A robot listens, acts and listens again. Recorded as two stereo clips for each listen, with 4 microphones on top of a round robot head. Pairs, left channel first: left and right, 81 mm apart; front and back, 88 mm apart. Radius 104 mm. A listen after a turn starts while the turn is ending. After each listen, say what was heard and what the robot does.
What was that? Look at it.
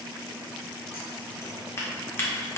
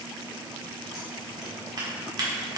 The scissors: 145° left. Turn 145° left.
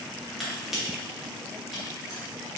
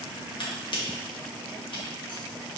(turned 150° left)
Facing the scissors.